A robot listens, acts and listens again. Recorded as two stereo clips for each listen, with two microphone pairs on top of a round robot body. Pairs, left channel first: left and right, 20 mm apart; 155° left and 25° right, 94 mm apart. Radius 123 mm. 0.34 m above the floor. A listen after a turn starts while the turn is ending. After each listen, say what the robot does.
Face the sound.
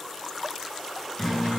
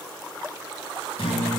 Turn 160° left.
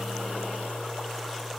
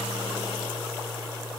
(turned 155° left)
Facing the guitar, over 4 m away.